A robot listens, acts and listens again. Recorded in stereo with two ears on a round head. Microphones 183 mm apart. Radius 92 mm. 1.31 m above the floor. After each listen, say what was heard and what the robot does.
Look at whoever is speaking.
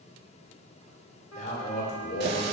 The man speaking: about 45° left or 135° left. Turn 45° left.
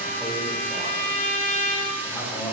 So it is at 15° left. Turn 15° left.
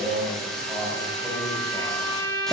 Found it: a man speaking, straight ahead.